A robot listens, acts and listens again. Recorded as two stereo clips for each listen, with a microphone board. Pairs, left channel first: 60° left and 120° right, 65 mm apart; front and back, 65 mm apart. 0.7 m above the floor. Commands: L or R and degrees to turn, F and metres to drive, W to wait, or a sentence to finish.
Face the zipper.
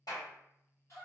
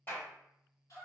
W
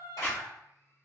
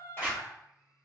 L105
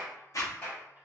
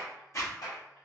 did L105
L35
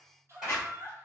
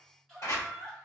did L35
Found it: a zipper, straight ahead.